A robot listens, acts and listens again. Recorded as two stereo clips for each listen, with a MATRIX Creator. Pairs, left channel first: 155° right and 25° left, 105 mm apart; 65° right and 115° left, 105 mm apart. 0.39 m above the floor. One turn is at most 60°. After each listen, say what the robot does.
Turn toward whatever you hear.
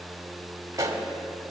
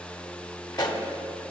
Turn 30° right.
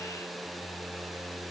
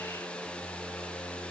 Facing where the pop came from. I can't hear it now.